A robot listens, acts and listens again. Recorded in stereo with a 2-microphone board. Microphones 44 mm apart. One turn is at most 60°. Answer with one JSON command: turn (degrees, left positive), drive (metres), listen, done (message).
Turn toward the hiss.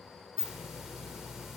{"turn": -30}
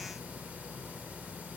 {"turn": -60}
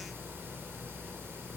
{"turn": -60}
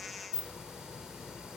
{"turn": -15}
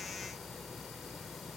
{"done": "Facing the hiss."}